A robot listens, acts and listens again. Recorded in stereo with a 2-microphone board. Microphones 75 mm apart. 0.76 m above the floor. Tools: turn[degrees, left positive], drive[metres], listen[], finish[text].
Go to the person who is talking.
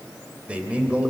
Thought: The man speaking: about 15° right or 165° right.
Action: turn[-15]
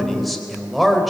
Action: drive[1.0]
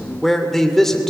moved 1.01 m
Action: drive[1.0]
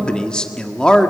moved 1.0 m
Thought: The man speaking is now 15° left.
Action: turn[15]
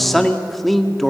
Action: drive[1.0]
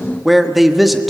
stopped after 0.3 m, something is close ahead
Action: finish[Arrived at the man speaking, straight ahead.]